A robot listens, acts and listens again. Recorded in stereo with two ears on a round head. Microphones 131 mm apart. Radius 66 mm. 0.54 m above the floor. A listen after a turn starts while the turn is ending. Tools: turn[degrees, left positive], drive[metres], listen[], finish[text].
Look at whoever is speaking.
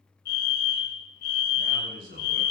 Thought: The man speaking: about 65° right or 115° right.
Action: turn[-65]
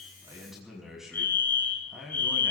Action: finish[Facing the man speaking, over 4 m away.]